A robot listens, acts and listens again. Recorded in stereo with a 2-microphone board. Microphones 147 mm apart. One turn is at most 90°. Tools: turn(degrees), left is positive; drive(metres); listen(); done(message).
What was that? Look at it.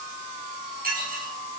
turn(degrees=-90)
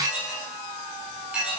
done("Found it: dishes clattering, straight ahead.")